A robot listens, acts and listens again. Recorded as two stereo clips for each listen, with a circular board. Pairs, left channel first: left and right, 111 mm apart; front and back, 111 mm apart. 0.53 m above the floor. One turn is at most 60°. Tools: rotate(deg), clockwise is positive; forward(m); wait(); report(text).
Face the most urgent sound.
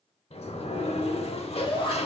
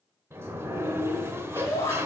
rotate(-60)
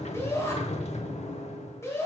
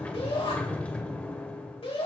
rotate(-25)
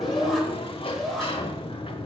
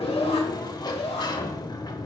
report("Facing the shout.")